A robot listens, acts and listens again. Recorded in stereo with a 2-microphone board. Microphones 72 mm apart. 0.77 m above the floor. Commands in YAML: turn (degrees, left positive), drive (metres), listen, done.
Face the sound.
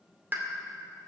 turn: -30
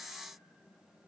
listen: true
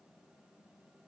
done: "I heard a pop, but can't make it out now. It was about straight ahead or 120° right."